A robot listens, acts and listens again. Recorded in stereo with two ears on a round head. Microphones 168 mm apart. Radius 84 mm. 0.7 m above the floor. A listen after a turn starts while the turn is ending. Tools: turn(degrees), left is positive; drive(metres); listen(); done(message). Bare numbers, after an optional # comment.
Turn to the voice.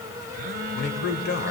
# The man speaking: about 55° left or 125° left.
turn(55)
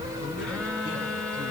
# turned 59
listen()
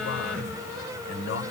# So it is at 80° left.
turn(80)
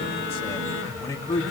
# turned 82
# The man speaking is now 20° left.
turn(20)
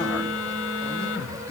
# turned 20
listen()
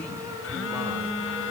listen()
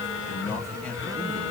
# The man speaking is now 10° left.
turn(10)
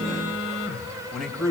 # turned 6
done("Facing the man speaking.")